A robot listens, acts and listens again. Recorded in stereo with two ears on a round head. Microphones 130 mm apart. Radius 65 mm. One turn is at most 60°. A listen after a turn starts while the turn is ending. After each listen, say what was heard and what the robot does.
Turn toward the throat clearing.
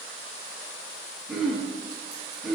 Turn 30° left.
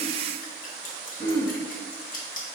So it is at 155° left. Turn 60° left.
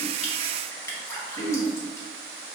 The throat clearing is now 75° left. Turn 60° left.
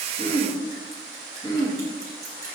The throat clearing is now 30° left. Turn 30° left.
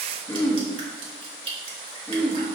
The throat clearing is now 15° left. Turn 15° left.
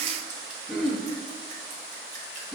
Found it: throat clearing, straight ahead.